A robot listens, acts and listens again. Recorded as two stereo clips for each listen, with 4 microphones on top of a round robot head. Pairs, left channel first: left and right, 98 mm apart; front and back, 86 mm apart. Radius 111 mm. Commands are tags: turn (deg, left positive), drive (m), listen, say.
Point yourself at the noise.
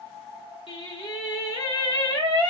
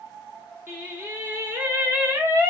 <turn deg="120"/>
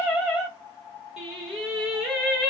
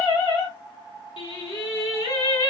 <say>Facing the singing, 2 to 4 m away.</say>